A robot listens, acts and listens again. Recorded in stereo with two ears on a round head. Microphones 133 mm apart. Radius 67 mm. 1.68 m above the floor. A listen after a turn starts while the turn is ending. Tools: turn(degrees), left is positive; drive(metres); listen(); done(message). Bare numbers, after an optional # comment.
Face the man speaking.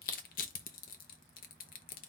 listen()
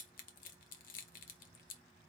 listen()
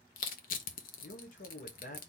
# The man speaking: about 60° left or 120° left.
turn(60)
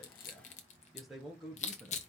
done("Facing the man speaking, 1 to 2 m away.")